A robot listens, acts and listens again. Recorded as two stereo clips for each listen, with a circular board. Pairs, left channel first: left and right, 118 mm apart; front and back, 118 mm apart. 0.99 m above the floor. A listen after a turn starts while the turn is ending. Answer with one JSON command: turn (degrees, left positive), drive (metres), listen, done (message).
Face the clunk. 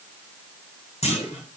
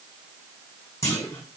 {"turn": 60}
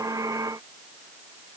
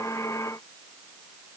{"done": "Facing where the clunk came from. I can't hear it now."}